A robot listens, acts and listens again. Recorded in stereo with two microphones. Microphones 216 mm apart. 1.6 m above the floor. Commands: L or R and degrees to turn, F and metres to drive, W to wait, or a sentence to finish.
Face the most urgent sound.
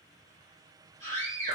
R30
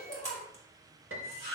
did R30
Facing the scream.